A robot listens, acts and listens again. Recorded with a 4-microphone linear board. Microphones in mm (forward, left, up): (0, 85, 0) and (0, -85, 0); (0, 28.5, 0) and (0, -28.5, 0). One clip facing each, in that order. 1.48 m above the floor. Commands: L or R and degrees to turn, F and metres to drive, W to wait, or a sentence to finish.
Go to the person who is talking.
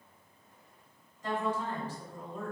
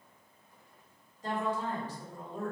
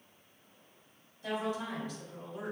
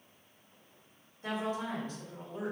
R40
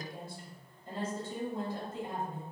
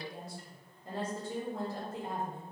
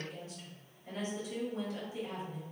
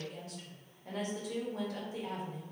R100
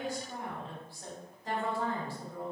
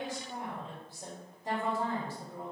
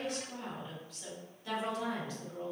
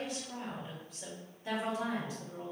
R20
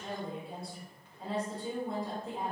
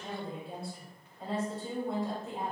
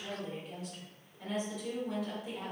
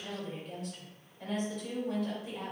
F1.0
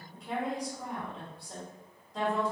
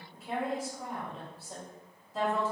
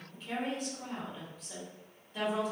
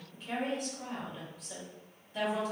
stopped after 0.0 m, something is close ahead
Something is in my way. I am facing the woman speaking but have not reached it.